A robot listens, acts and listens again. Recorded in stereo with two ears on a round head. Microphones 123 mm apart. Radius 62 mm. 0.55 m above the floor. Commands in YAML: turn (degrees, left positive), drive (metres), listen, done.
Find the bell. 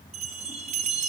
turn: -45
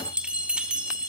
turn: -10
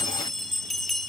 done: "Found it: a bell, straight ahead, 1 to 2 m away."